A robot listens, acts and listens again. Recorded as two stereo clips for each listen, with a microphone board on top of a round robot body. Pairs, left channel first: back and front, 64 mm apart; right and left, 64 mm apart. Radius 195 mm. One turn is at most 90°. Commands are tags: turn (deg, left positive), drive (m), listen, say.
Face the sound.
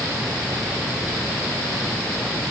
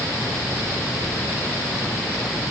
<listen/>
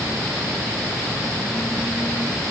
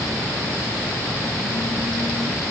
<listen/>
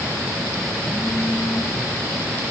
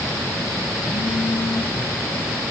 <say>I can't make out anything to turn to.</say>